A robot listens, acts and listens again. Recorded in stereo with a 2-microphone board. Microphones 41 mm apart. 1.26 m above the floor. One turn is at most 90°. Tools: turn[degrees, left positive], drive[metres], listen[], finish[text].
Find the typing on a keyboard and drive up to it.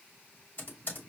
Thought: The typing on a keyboard: about 55° left or 125° left.
Action: turn[55]
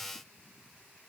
Action: listen[]
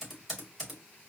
Action: drive[1.0]
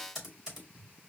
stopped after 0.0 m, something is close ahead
Action: finish[Something is in my way. I am facing the typing on a keyboard but have not reached it.]